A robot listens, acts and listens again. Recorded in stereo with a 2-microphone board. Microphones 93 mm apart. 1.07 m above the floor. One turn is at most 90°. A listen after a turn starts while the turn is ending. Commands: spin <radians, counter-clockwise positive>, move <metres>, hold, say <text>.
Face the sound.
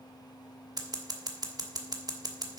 spin -0.79
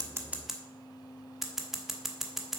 say Found it: scissors, straight ahead.